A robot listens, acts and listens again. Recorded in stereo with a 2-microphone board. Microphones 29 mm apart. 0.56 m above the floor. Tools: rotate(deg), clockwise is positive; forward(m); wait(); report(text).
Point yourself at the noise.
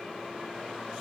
wait()
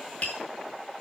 rotate(-55)
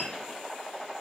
wait()
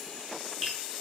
report("Facing the tapping, over 4 m away.")